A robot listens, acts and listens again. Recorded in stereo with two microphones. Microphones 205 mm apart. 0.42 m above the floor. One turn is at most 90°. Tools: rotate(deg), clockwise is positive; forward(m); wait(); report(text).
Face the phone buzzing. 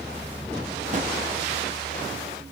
wait()
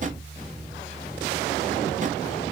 wait()
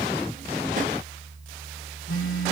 rotate(-90)
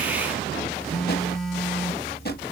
report("Found it: a phone buzzing, straight ahead, under 1 m away.")